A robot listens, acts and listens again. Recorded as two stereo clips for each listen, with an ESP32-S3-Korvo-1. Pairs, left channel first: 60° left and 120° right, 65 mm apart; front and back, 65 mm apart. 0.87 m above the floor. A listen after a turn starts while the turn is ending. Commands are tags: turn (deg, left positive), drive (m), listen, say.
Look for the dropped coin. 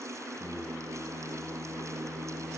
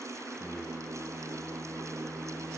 <listen/>
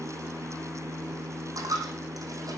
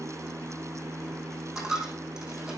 <turn deg="-100"/>
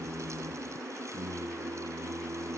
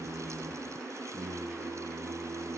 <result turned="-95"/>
<say>Facing where the dropped coin came from. I can't hear it now.</say>